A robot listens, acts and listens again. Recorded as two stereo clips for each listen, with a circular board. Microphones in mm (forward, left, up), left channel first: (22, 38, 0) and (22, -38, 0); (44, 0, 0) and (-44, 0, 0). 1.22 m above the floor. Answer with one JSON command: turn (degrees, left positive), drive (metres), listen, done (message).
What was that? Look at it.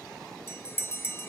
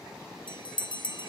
{"turn": 30}
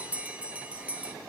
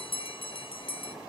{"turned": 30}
{"turn": -15}
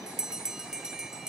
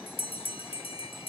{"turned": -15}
{"done": "Found it: a bell, straight ahead."}